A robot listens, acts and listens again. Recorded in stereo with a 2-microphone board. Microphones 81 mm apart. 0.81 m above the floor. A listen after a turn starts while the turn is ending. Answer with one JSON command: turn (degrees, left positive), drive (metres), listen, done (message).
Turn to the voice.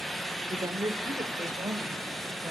{"turn": -50}
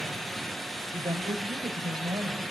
{"turn": -65}
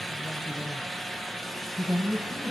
{"turn": 10}
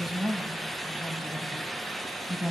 {"done": "Facing the woman speaking, over 4 m away."}